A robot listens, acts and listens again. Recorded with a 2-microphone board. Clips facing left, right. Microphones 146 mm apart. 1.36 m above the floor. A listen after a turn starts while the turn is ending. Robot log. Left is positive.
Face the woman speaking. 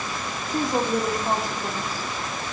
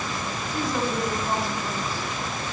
note: The woman speaking: about 45° left or 135° left.
cmd yaw +45
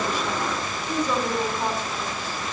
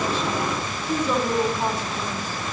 note: So it is at 10° right.
cmd yaw -10
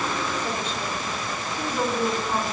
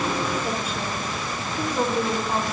note: The woman speaking is now 15° right.
cmd yaw -15
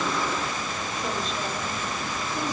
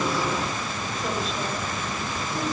cmd idle
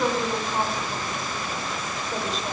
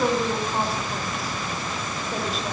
end: Found it: a woman speaking, straight ahead, over 4 m away.